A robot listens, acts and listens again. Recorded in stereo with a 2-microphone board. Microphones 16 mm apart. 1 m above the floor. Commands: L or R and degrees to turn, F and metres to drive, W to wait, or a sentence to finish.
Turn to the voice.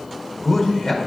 L30
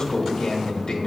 L120
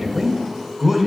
R30
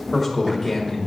Found it: a man speaking, straight ahead.